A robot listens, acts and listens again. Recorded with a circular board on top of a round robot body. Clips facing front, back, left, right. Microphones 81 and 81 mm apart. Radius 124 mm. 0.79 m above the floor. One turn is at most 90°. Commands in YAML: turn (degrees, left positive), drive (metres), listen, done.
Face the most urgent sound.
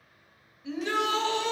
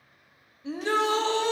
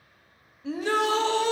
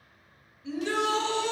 turn: 90
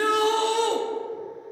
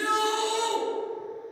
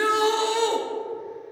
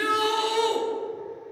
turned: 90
turn: 30
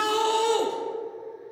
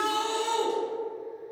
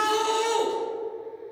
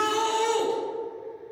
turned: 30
done: "Facing the shout."